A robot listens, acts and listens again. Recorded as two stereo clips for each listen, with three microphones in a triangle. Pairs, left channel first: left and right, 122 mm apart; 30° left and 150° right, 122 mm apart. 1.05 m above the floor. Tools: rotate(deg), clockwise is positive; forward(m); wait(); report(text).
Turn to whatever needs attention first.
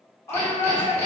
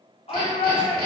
rotate(-25)
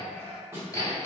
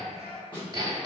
wait()
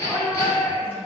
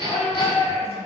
rotate(-20)
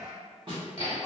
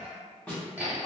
wait()
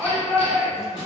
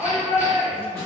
report("Found it: a shout, straight ahead.")